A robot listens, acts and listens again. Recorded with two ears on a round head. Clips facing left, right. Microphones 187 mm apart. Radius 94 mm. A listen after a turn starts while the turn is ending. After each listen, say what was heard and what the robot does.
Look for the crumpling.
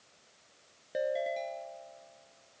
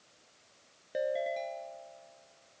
Keep listening.
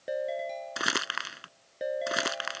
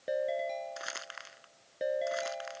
Turn 90° left.
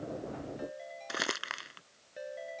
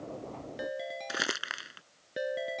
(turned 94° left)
Facing the crumpling.